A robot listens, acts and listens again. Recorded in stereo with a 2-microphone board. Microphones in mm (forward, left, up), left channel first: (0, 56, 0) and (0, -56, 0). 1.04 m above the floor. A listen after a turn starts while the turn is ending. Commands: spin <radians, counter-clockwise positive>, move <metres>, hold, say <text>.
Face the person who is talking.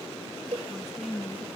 spin 0.52
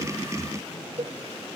hold
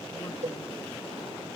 hold
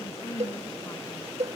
spin 2.62
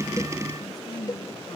spin 0.61
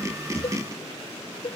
hold
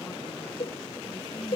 hold
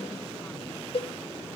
say I heard a woman speaking from this way, but can't make it out now.